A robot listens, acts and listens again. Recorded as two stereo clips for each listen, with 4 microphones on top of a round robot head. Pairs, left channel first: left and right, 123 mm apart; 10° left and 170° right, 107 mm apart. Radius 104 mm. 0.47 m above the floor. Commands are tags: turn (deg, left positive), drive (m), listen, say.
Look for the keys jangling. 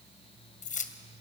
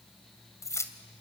<turn deg="75"/>
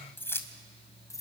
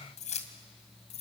<turn deg="25"/>
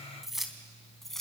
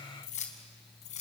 <say>Facing the keys jangling, 2 to 4 m away.</say>